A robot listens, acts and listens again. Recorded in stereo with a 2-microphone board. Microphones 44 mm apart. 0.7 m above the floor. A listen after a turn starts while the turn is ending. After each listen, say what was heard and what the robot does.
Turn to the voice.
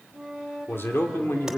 The man speaking: about 60° left or 120° left. Turn 60° left.
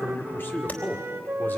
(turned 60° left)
So it is at 55° left. Turn 55° left.
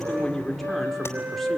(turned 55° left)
Found it: a man speaking, straight ahead.